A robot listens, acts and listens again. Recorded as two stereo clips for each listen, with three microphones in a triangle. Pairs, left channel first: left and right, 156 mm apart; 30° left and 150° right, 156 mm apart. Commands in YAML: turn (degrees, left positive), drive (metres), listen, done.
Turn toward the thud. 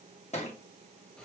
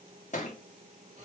turn: 55
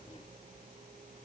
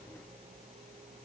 done: "Facing where the thud came from. I can't hear it now."